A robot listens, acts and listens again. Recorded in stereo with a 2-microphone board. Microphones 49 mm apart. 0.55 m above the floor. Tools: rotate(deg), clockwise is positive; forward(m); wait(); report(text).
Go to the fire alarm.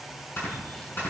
wait()
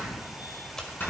wait()
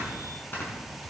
report("I can't make out a fire alarm, only snoring.")